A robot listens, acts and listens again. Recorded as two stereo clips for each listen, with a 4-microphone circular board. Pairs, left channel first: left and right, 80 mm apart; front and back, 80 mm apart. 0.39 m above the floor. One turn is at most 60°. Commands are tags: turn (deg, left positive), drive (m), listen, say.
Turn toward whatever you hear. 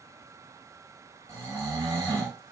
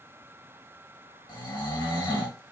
<turn deg="-35"/>
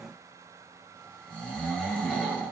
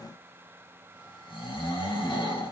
<turn deg="15"/>
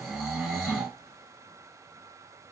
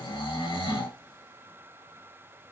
<say>Found it: snoring, straight ahead.</say>